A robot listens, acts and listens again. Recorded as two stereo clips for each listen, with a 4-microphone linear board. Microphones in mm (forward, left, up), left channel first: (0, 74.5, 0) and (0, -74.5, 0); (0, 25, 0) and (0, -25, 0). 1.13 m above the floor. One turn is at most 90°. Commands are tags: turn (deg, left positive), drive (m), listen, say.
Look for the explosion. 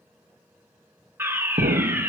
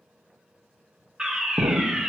<turn deg="-90"/>
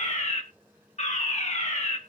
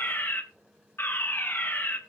<say>I heard an explosion from this way, but can't make it out now.</say>